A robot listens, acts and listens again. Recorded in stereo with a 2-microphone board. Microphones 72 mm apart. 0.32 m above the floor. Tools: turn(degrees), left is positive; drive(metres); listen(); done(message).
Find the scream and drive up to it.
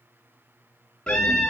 turn(degrees=30)
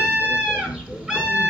turn(degrees=-20)
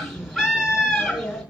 drive(metres=1.0)
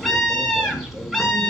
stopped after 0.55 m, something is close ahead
done("Blocked. The scream is further on, straight ahead.")